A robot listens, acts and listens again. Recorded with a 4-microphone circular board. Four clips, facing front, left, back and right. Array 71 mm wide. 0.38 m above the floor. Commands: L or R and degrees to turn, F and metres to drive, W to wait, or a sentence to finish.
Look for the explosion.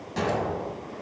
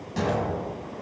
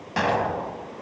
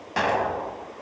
R125
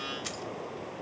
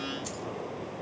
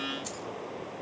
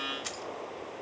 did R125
I heard an explosion from this way, but can't make it out now.